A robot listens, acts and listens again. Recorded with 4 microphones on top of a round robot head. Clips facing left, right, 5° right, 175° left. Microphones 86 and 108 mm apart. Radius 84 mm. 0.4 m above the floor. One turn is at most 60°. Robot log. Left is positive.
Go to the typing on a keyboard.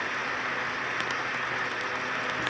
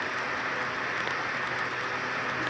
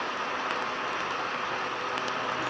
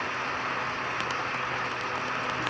cmd idle
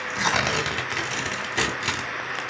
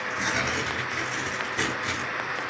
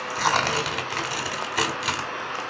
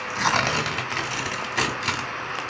cmd idle
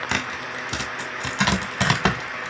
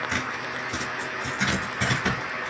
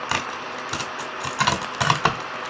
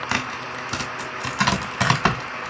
end: I can't make out typing on a keyboard, only tearing paper.